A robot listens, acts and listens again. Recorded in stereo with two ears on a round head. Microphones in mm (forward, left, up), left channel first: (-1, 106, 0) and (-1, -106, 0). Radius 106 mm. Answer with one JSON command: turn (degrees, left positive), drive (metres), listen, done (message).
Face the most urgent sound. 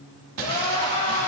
{"turn": 25}
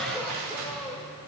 {"done": "Found it: crying, straight ahead."}